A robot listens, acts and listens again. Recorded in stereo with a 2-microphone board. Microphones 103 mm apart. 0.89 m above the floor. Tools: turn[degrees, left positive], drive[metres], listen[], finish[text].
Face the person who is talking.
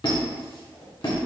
Action: listen[]
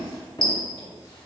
Action: listen[]
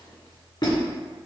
Action: finish[I can't make out anyone speaking to turn to.]